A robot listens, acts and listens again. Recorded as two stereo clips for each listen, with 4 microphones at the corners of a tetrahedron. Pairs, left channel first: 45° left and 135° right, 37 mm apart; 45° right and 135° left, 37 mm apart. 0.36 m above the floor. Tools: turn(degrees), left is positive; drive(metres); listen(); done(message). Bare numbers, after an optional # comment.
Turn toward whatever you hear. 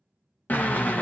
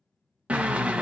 # The drill: 80° left.
turn(80)
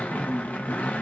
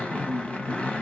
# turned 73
done("Facing the drill, under 1 m away.")